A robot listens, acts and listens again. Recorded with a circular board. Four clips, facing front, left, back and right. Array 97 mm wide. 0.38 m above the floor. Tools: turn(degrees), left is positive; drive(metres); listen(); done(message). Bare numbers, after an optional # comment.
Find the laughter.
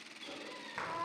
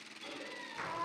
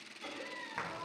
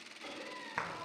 # The laughter: 155° right.
turn(-155)
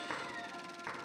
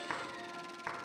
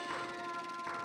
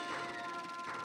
listen()
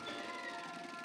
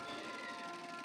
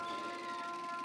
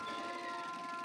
listen()
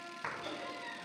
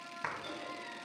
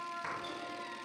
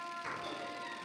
done("Facing where the laughter came from. I can't hear it now.")